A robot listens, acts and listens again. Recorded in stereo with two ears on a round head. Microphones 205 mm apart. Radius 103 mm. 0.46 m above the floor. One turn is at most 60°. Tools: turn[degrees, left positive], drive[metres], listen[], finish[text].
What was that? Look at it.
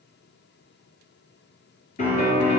Thought: The piano: about 35° left or 145° left.
Action: turn[35]
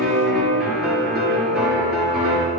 Action: finish[Facing the piano.]